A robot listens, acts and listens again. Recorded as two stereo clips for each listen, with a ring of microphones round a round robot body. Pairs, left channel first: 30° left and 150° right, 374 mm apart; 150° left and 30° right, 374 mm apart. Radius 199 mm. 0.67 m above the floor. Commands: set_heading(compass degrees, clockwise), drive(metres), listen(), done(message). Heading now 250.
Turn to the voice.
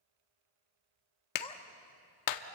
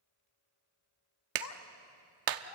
set_heading(145)
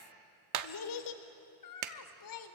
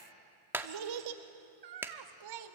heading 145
done("Found it: a child speaking, straight ahead.")